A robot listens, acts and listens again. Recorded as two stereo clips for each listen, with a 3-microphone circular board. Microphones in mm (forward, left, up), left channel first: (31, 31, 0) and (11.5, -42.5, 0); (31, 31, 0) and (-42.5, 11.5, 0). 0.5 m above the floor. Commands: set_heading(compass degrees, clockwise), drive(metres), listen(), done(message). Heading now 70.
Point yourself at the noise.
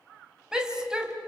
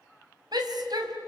set_heading(255)
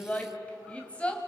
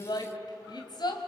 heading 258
done("Facing the shout.")